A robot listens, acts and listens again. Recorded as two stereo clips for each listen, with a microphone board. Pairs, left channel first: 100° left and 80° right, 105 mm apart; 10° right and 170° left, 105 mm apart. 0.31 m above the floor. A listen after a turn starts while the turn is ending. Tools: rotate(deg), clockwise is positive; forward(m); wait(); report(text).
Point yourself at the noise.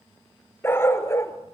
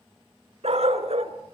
rotate(-165)
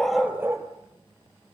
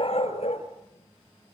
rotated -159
rotate(15)
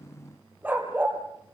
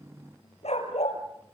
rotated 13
report("Facing the dog barking, over 4 m away.")